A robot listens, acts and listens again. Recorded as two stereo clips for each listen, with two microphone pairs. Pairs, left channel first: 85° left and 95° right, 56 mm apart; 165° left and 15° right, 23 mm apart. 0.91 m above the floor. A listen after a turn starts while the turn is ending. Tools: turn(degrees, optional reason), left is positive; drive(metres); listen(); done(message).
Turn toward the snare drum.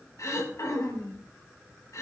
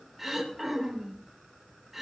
listen()
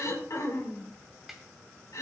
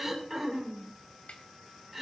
turn(degrees=175, reason="The snare drum: 175° left.")
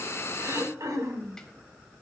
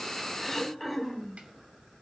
listen()
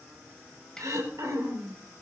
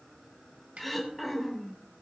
done("Found it: a snare drum, straight ahead.")